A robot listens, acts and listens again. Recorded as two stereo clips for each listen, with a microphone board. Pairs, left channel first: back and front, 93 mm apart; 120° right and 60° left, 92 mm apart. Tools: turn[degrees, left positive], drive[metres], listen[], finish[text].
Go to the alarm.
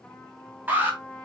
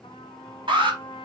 Thought: The alarm: 70° left.
Action: turn[70]
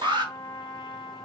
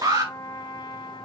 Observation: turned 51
Thought: The alarm is now 20° left.
Action: turn[20]
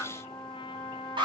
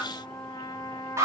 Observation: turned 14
Action: drive[1.0]
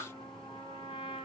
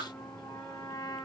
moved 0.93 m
Action: listen[]
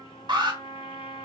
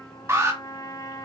Thought: The alarm is now 10° left.
Action: turn[10]
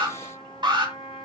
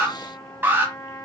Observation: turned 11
Action: drive[1.0]
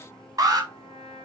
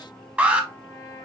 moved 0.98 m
Action: drive[1.0]
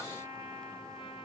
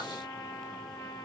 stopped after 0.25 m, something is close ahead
Action: listen[]
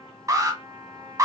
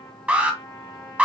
Action: finish[Arrived at the alarm, straight ahead.]